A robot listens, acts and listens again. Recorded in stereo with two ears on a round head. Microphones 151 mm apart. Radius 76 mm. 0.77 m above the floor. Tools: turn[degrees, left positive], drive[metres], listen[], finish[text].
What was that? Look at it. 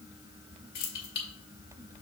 Thought: The keys jangling: about 65° left or 115° left.
Action: turn[65]
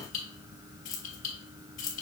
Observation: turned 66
Thought: So it is at 45° left.
Action: turn[45]
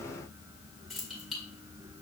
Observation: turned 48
Action: finish[Found it: keys jangling, straight ahead, 1 to 2 m away.]